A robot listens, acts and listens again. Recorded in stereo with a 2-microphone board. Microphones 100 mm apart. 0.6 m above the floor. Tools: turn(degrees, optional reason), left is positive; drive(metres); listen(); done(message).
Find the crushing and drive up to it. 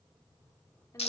listen()
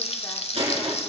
turn(degrees=-75, reason="The crushing: about 75° right or 105° right.")
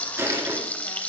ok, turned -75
turn(degrees=-25, reason="So it is at 25° right.")
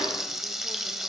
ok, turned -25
listen()
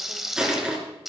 drive(metres=1.0)
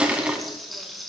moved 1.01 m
turn(degrees=-10, reason="The crushing is now 10° right.")
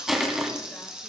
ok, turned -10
drive(metres=1.0)
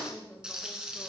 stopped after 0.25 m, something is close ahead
listen()
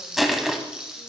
done("Arrived at the crushing, straight ahead.")